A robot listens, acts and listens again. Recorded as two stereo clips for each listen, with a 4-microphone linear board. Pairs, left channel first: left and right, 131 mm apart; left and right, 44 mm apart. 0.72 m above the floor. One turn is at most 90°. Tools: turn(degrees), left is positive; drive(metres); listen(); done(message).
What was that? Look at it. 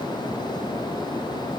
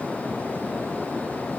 listen()
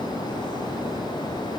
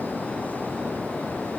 listen()
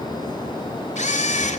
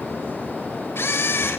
turn(degrees=65)
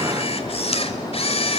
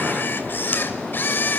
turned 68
turn(degrees=50)
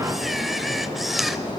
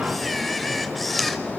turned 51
done("Found it: a camera shutter, straight ahead, 1 to 2 m away.")